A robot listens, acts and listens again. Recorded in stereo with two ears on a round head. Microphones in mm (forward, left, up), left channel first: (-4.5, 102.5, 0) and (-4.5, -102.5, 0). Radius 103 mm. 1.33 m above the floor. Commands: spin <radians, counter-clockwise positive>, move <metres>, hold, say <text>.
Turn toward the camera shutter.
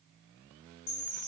hold
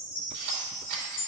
spin -0.96
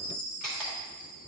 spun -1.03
say Facing the camera shutter.